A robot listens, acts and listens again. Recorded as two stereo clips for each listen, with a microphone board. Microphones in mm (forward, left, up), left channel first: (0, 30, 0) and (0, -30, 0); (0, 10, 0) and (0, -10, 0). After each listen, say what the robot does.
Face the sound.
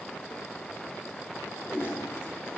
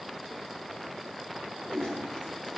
Turn 50° left.
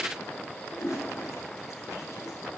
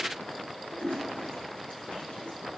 Turn 80° left.
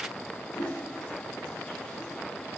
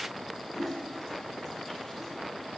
Turn 15° left.
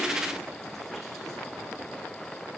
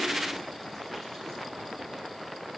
Keep listening.
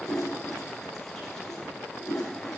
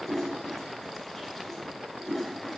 Found it: a toilet flushing, straight ahead.